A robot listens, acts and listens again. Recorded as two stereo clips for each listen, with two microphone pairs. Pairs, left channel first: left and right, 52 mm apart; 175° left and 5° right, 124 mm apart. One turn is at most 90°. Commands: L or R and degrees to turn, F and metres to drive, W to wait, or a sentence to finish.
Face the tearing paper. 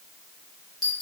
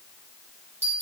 W
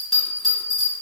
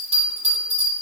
W
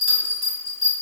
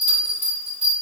I can't make out tearing paper to turn to.